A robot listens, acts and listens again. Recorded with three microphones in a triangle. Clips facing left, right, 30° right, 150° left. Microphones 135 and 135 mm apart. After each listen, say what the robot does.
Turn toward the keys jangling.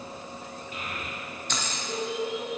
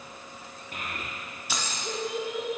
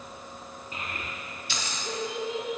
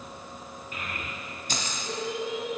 Turn 170° right.
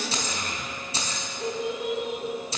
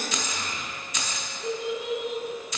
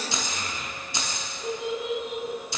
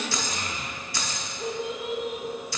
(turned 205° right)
Turn 35° left.
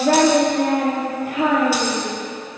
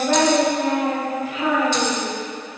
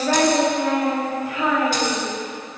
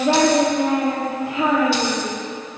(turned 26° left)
Turn 10° left.
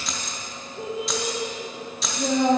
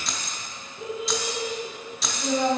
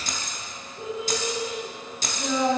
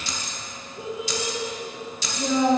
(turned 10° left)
Found it: keys jangling, straight ahead, under 1 m away.